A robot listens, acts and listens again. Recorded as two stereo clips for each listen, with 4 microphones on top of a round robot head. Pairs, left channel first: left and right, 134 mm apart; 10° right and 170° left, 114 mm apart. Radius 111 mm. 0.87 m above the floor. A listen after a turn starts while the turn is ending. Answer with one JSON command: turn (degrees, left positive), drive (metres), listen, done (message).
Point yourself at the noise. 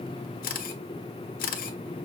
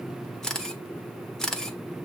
{"turn": 75}
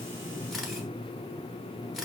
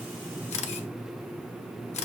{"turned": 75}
{"done": "Found it: a camera shutter, straight ahead."}